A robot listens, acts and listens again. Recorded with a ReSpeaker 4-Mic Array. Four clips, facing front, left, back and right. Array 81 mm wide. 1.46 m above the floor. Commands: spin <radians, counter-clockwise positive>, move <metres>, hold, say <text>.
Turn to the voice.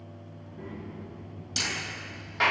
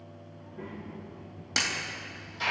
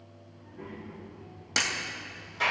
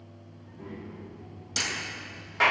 spin 1.57
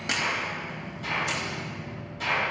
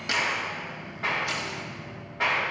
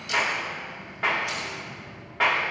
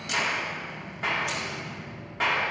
spin -0.35
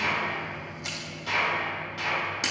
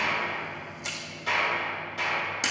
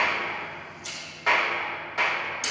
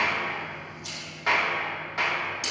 hold
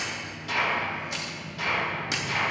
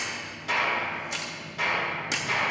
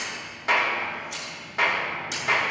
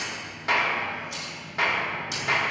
hold
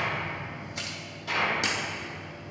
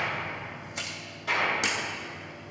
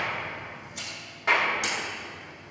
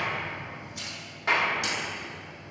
say I heard a child speaking from this way, but can't make it out now.